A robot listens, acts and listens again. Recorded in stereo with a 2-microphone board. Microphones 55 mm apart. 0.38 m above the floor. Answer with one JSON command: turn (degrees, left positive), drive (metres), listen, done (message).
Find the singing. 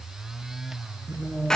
{"turn": -35}
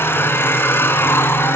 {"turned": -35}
{"listen": true}
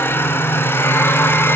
{"listen": true}
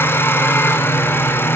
{"turn": -15}
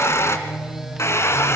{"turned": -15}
{"listen": true}
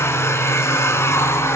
{"listen": true}
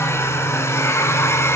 {"done": "I heard singing from this way, but can't make it out now."}